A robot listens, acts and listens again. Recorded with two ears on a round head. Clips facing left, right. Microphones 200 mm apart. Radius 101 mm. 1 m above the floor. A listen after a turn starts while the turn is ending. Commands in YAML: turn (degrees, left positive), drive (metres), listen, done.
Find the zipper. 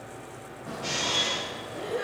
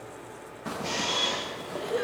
turn: -90
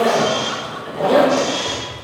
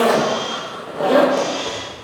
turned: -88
done: "Facing the zipper, under 1 m away."